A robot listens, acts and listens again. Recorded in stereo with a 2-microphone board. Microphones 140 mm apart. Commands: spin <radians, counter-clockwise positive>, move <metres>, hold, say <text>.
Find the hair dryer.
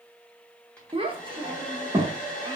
spin 0.52
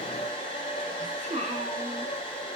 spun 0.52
spin 2.44
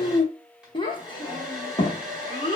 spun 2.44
say Facing the hair dryer, 1 to 2 m away.